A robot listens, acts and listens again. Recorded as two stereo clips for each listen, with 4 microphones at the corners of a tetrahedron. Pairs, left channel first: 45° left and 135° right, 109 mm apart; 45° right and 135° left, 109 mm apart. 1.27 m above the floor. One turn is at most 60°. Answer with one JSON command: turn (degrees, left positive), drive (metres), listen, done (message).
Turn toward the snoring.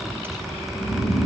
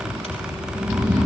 {"turn": 45}
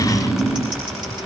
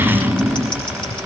{"turn": 20}
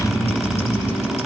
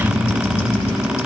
{"done": "Facing the snoring."}